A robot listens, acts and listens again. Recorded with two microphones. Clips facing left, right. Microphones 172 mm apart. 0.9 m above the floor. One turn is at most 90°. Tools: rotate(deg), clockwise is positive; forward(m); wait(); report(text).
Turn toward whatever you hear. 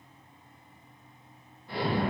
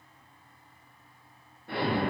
rotate(60)
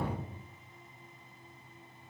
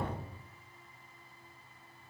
rotate(55)
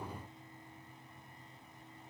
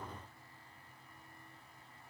report("I heard an explosion from this way, but can't make it out now.")